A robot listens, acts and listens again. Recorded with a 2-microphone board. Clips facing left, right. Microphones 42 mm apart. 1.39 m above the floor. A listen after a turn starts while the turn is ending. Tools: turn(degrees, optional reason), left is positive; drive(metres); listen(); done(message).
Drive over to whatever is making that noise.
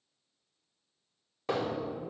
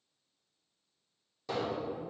turn(degrees=45, reason="The hammering: about 45° left or 135° left.")
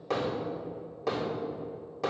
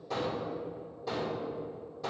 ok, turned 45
turn(degrees=95, reason="So it is at 95° left.")
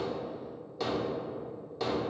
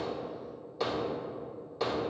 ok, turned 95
drive(metres=1.0)
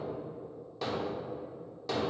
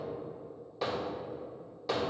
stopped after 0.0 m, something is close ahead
turn(degrees=-10, reason="The hammering is now 10° right.")
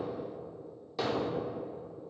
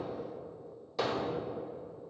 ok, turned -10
done("Blocked. The hammering is further on, straight ahead.")